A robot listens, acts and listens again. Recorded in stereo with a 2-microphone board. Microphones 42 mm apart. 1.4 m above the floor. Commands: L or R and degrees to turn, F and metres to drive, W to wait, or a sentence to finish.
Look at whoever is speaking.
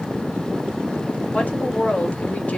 L35
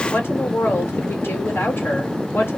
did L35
L110
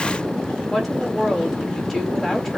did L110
L10
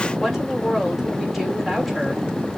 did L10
Facing the woman speaking.